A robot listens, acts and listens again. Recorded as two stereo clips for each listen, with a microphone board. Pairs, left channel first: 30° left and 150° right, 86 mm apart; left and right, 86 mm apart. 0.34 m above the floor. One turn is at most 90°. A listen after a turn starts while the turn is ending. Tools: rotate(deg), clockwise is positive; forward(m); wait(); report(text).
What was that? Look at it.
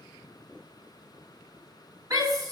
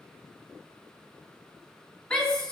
rotate(-90)
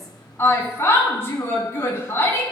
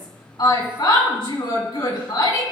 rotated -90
rotate(-90)
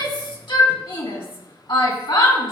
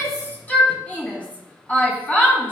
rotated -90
rotate(-20)
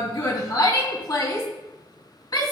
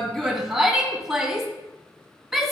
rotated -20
report("Facing the shout, 2 to 4 m away.")